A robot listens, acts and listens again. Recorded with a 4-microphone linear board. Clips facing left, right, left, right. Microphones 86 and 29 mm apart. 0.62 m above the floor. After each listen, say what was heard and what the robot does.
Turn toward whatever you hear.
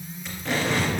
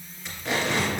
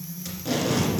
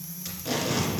Turn 30° left.
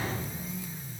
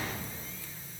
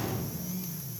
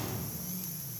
Keep listening.
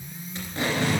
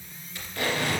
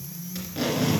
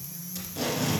So it is at 150° left. Turn 150° left.
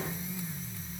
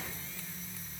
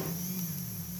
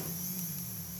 Keep listening.
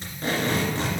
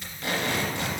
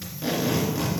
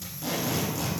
The tape being pulled is now 30° left. Turn 30° left.
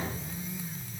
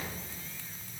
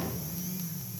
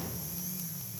Keep listening.
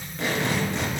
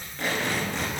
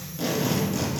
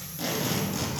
Facing the tape being pulled, 2 to 4 m away.